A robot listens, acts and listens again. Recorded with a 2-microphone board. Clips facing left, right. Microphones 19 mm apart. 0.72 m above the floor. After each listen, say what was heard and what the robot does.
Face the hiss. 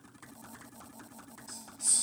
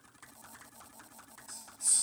The hiss: about 60° left or 120° left. Turn 60° left.
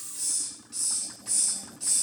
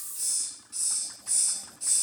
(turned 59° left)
So it is at 45° left. Turn 45° left.
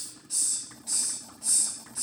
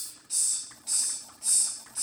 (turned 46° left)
Found it: a hiss, straight ahead.